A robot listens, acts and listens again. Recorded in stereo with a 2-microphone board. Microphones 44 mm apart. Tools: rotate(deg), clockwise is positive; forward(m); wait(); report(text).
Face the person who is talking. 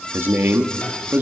rotate(50)
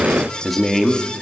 report("Facing the man speaking, 2 to 4 m away.")